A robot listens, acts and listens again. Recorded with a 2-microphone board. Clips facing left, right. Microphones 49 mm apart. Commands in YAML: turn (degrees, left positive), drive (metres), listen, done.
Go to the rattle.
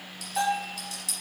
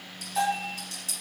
turn: -40
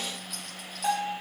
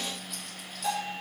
listen: true
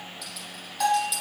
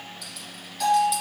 drive: 1.0
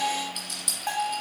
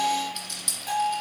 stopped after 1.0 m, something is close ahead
done: "Arrived at the rattle, straight ahead."